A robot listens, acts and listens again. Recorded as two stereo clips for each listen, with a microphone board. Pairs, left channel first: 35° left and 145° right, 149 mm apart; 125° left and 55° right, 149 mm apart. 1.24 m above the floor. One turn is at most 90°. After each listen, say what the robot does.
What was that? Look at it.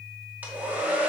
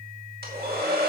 Turn 65° right.
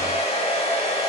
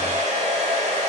Turn 15° right.
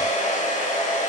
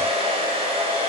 Found it: a hair dryer, straight ahead, 2 to 4 m away.